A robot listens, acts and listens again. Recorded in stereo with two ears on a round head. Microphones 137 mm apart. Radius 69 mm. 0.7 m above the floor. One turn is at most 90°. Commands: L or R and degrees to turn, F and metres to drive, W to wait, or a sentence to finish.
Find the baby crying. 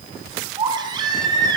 R30
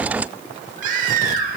R90
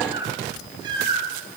R30
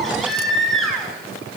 Found it: a baby crying, straight ahead.